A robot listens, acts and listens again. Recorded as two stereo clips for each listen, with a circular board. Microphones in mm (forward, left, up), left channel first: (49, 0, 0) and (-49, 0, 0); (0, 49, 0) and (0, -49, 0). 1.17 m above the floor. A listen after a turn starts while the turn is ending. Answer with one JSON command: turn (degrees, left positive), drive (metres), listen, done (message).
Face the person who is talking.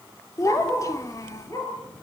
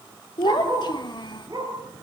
{"turn": 55}
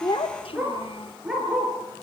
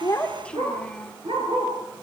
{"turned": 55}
{"turn": 10}
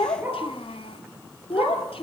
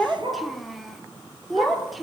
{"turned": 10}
{"done": "Found it: a child speaking, straight ahead."}